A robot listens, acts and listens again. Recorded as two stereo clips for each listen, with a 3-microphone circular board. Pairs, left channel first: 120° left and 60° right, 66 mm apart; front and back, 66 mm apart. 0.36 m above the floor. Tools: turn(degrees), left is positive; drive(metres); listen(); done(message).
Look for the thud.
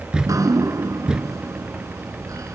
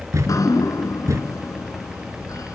turn(degrees=-135)
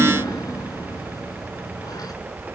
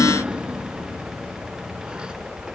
done("I heard a thud from this way, but can't make it out now.")